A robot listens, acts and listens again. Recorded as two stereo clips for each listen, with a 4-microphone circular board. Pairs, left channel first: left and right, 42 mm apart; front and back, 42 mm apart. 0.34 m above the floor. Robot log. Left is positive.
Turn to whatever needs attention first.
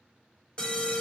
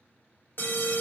note: The alarm: 20° left.
cmd yaw +20
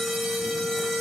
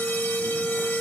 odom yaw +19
end: Found it: an alarm, straight ahead, 1 to 2 m away.